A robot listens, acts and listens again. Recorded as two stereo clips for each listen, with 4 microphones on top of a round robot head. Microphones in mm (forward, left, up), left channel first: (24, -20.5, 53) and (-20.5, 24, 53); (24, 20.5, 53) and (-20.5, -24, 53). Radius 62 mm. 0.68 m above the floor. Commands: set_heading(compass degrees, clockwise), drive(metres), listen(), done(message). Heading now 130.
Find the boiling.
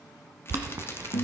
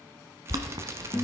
set_heading(300)
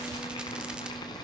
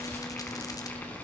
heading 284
set_heading(304)
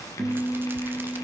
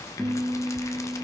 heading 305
listen()
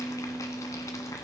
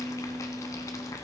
done("Facing the boiling.")